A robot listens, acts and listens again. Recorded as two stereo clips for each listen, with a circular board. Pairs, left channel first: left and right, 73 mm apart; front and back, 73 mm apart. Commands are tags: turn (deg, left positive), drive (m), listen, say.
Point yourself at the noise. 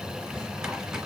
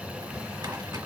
<turn deg="-170"/>
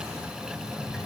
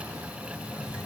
<turn deg="35"/>
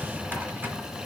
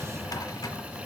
<turn deg="-25"/>
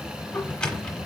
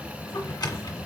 <turn deg="15"/>
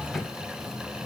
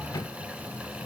<say>Found it: a drawer, straight ahead, under 1 m away.</say>